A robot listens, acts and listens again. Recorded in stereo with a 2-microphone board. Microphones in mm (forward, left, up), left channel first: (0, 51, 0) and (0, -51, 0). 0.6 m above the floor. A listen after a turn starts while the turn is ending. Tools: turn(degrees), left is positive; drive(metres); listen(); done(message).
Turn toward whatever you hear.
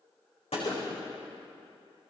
turn(degrees=70)
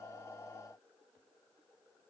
listen()
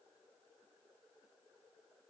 done("I heard a gunshot, but can't make it out now. It was about straight ahead or 40° left.")